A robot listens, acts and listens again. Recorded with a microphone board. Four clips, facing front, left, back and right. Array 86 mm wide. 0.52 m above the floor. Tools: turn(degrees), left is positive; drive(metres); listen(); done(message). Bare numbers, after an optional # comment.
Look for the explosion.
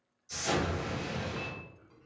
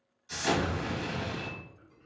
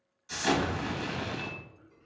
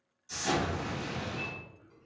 # The explosion: 160° left.
turn(160)
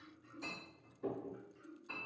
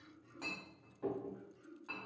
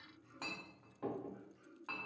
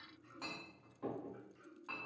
done("I heard an explosion from this way, but can't make it out now.")